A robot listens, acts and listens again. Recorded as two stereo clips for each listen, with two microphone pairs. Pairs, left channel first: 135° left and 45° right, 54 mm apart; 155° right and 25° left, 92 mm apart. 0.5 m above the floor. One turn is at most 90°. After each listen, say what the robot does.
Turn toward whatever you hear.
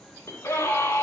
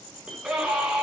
Turn 90° left.
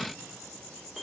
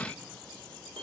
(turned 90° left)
Turn 45° left.
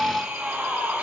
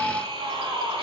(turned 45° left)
Turn 20° left.
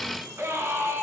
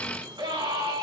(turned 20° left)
Found it: a scream, straight ahead, over 4 m away.